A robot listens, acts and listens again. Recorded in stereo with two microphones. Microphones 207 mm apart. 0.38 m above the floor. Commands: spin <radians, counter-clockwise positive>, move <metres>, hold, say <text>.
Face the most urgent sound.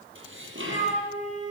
hold
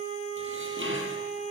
hold
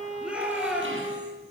spin -0.52
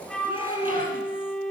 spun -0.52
hold
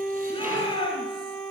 spin 0.44
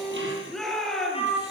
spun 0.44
say Found it: a shout, straight ahead, over 4 m away.